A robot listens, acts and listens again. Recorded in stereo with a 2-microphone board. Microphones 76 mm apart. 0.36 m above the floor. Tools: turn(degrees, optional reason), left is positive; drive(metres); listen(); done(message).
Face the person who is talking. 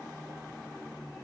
listen()
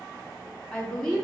turn(degrees=30)
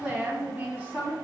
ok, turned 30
turn(degrees=-25, reason="So it is at 25° right.")
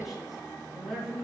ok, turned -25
done("Facing the woman speaking, 2 to 4 m away.")